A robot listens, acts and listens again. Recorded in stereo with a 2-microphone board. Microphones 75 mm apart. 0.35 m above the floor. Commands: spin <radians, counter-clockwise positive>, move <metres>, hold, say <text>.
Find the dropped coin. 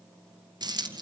spin -1.31
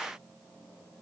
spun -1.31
hold
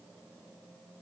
say I heard a dropped coin, but can't make it out now. It was about straight ahead or 30° right.